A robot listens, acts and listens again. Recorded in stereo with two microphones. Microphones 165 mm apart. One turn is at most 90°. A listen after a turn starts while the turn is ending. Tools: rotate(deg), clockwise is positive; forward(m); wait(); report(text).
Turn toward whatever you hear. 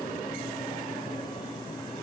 wait()
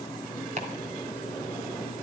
rotate(45)
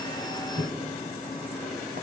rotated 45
rotate(80)
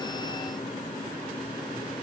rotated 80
wait()
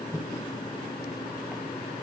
rotate(10)
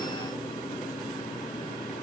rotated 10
wait()
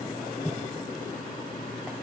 report("Found it: chopping, straight ahead, 2 to 4 m away.")